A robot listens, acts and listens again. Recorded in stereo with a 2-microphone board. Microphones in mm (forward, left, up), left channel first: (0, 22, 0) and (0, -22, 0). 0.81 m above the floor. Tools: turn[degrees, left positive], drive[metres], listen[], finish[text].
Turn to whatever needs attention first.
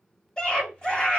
Thought: The scream: about 15° left or 165° left.
Action: turn[15]
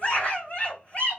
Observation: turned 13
Thought: So it is at 150° left.
Action: turn[150]
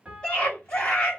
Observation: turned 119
Thought: The scream is now 30° left.
Action: turn[30]
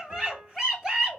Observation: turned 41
Thought: The scream is now 10° right.
Action: turn[-10]
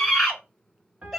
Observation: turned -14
Action: finish[Facing the scream.]